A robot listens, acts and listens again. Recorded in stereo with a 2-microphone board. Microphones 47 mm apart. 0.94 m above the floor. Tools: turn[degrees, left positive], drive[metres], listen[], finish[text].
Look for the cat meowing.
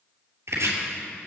Action: listen[]
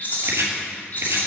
Action: listen[]
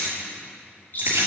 Action: finish[I can't make out a cat meowing to turn to.]